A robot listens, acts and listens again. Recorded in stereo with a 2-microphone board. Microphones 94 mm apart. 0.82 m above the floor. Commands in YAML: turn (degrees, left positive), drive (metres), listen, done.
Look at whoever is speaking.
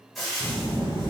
turn: 40
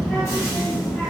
done: "Found it: a child speaking, straight ahead."